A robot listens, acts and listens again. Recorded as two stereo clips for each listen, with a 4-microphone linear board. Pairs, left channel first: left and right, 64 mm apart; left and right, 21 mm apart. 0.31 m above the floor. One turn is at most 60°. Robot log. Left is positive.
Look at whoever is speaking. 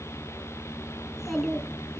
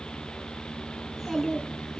cmd yaw +30
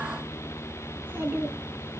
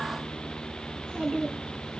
note: So it is at 30° right.
cmd yaw -30
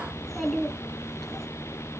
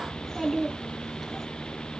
end: Found it: a child speaking, straight ahead.